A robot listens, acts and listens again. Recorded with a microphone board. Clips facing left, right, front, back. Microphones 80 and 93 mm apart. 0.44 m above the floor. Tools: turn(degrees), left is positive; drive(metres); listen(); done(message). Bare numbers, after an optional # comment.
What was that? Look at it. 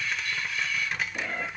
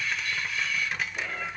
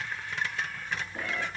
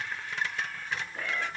# The cat meowing: 70° left.
turn(70)
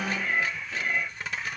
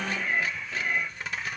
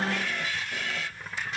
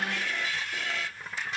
done("Found it: a cat meowing, straight ahead, over 4 m away.")